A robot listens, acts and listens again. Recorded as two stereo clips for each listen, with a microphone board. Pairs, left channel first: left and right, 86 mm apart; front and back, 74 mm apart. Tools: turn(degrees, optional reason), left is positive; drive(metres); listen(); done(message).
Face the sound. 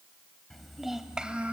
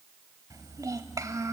turn(degrees=-160, reason="The child speaking: 160° right.")
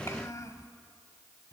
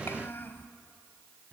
turn(degrees=55, reason="The child speaking is now 55° left.")
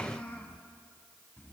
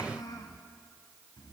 turn(degrees=25, reason="The child speaking is now 25° left.")
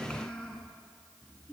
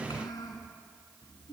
turn(degrees=15, reason="The child speaking is now 15° left.")
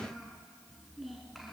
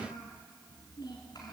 done("Facing the child speaking.")